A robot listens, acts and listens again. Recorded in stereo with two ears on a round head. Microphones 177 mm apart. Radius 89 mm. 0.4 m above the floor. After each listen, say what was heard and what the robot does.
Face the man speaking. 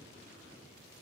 Keep listening.
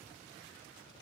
Keep listening.
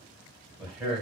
Turn 30° right.
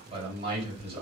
So it is at 145° right. Turn 145° right.
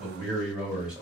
Facing the man speaking.